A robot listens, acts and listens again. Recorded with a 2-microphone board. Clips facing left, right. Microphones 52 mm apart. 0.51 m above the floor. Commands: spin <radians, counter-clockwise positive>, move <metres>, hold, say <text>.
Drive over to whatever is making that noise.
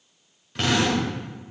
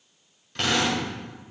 spin 0.52
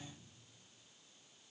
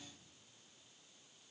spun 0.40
hold
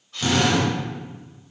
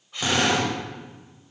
spin -0.35
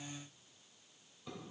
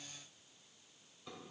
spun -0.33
hold
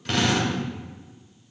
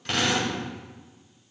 move 1.0
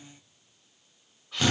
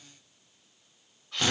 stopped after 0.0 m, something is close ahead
say Blocked. The drill is further on, straight ahead.